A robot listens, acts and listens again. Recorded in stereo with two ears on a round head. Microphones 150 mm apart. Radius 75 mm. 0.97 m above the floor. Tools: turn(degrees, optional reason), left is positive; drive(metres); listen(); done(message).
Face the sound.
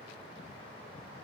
listen()
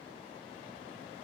listen()
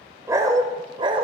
turn(degrees=-30, reason="The dog barking: about 30° right or 150° right.")
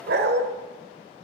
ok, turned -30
turn(degrees=-110, reason="So it is at 110° right.")
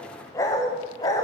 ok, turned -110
turn(degrees=20, reason="The dog barking is now 20° left.")
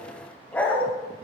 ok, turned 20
turn(degrees=10, reason="The dog barking is now 10° left.")
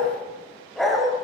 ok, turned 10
done("Facing the dog barking.")